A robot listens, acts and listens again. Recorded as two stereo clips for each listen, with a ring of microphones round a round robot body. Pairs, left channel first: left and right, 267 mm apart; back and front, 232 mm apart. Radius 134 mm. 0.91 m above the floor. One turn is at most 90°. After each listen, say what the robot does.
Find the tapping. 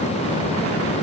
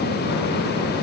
Keep listening.
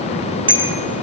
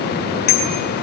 Keep listening.
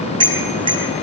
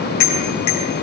I can't make out tapping, only a bicycle bell.